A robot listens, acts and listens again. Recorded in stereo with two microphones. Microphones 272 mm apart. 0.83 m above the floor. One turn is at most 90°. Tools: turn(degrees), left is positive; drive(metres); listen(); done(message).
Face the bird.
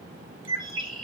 turn(degrees=65)
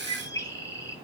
turn(degrees=15)
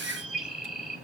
done("Facing the bird, 1 to 2 m away.")